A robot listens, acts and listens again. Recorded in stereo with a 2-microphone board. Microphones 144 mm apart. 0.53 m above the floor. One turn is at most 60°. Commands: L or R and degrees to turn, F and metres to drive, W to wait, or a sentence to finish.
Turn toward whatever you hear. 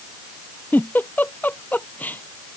L30
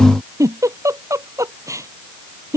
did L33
R20
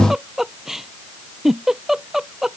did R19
Found it: a giggle, straight ahead.